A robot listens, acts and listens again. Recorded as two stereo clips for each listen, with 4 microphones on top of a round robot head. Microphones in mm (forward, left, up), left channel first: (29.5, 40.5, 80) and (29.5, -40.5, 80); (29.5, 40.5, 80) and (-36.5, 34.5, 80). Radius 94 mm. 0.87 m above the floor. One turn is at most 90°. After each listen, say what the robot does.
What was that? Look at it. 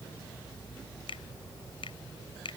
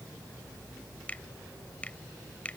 Turn 75° left.
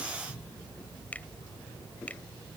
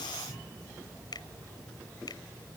Turn 20° left.
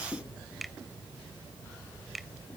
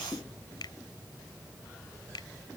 Facing the finger snap.